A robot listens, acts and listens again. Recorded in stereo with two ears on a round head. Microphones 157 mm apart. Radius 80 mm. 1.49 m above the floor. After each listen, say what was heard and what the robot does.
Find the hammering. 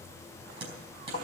The hammering: about 30° right or 150° right. Turn 30° right.
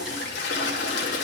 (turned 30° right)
Keep listening.
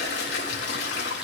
Keep listening.
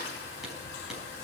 I heard hammering, but can't make it out now. It was about straight ahead or 120° right.